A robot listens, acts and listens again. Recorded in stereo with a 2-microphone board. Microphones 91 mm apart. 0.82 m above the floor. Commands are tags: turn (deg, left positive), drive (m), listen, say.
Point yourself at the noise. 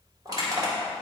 <turn deg="-40"/>
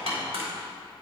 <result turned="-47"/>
<turn deg="-95"/>
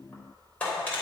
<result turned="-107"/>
<turn deg="15"/>
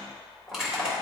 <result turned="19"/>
<say>Facing the crushing, 2 to 4 m away.</say>